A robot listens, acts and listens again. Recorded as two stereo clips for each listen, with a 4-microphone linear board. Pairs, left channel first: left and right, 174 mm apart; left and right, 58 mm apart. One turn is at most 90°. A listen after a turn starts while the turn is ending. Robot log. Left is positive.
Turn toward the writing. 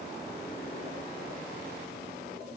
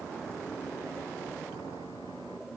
cmd idle
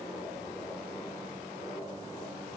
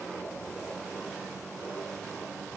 cmd idle
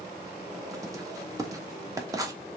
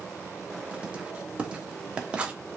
note: The writing: about 20° right or 160° right.
cmd yaw -20
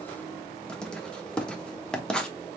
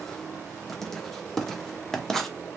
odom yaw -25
end: Found it: writing, straight ahead, under 1 m away.